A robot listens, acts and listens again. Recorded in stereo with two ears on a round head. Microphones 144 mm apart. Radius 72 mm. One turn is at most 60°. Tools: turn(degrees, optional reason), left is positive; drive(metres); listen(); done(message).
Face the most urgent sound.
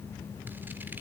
listen()
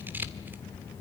listen()
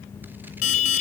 turn(degrees=45, reason="The alarm: about 45° left or 135° left.")
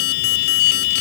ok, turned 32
turn(degrees=60, reason="So it is at 100° left.")
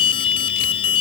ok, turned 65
turn(degrees=35, reason="The alarm is now 35° left.")
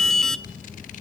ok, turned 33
done("Facing the alarm.")